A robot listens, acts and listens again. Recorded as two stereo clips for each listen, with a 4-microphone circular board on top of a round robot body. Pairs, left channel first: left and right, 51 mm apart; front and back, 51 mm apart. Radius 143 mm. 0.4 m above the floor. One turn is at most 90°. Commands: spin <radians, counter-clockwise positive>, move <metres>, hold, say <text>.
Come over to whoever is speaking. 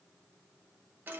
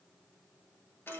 hold
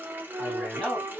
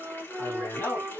move 1.0
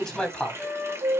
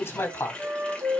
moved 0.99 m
spin 0.26
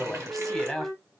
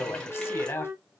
move 1.0
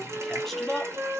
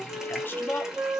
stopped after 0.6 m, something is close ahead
say Arrived at the man speaking, straight ahead.